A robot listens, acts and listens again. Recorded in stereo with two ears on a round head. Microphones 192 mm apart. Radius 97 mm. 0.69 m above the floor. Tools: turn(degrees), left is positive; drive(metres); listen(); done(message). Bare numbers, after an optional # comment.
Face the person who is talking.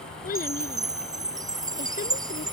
# The child speaking: about 45° left or 135° left.
turn(45)
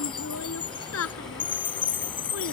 # So it is at 90° left.
turn(90)
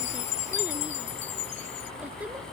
listen()
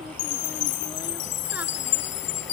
listen()
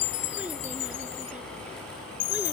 done("Facing where the child speaking came from. I can't hear it now.")